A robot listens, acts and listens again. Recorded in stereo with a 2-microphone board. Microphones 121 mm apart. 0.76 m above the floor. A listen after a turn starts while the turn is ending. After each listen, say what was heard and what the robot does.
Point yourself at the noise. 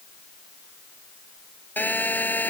Turn 30° left.
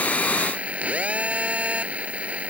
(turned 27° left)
So it is at 10° right. Turn 10° right.
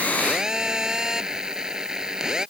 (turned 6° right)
Found it: a phone buzzing, straight ahead.